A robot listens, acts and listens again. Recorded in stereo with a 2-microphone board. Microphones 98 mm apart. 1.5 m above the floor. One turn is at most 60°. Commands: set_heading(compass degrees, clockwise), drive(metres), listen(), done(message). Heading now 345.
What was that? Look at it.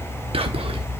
set_heading(45)
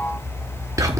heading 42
set_heading(77)
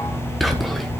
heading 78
done("Found it: whispering, straight ahead, 1 to 2 m away.")